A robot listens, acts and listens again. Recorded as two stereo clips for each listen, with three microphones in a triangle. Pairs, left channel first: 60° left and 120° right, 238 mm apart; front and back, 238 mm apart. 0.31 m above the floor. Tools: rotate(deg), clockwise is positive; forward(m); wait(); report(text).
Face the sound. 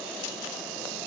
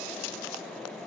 wait()
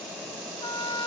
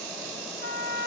rotate(-130)
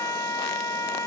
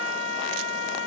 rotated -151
rotate(20)
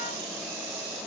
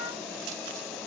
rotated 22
wait()
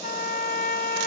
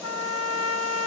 report("Facing the trumpet, under 1 m away.")